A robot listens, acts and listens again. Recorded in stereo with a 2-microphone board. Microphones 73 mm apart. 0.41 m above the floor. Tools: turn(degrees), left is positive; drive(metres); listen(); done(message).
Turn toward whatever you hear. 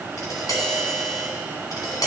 turn(degrees=55)
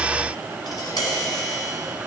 turn(degrees=70)
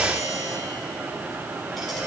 done("Facing the tapping, 2 to 4 m away.")